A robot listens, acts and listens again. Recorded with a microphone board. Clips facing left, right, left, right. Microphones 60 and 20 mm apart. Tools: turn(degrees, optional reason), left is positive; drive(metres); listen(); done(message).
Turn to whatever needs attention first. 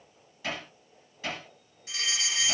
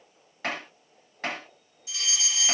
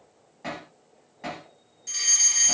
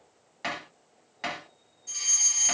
turn(degrees=50, reason="The fire alarm: about 50° left or 130° left.")
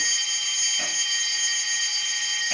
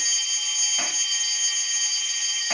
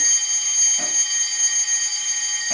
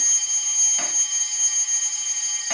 turn(degrees=70, reason="So it is at 70° left.")
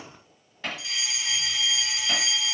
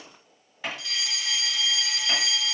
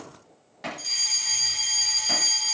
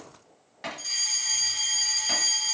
turn(degrees=10, reason="The fire alarm is now 10° left.")
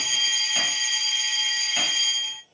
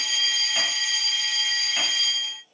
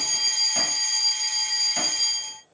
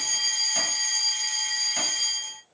done("Facing the fire alarm.")